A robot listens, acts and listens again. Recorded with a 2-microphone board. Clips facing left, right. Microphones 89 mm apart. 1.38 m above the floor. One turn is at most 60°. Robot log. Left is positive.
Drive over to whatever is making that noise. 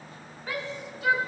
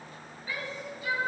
cmd yaw +60
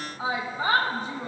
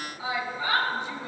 note: So it is at 40° left.
cmd yaw +40
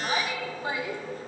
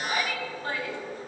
note: The shout is now 15° left.
cmd yaw +15
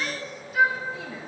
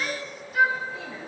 cmd fwd 1.0
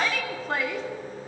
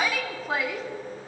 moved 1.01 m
cmd fwd 1.0
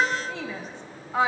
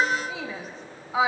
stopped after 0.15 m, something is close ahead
end: I am next to the shout.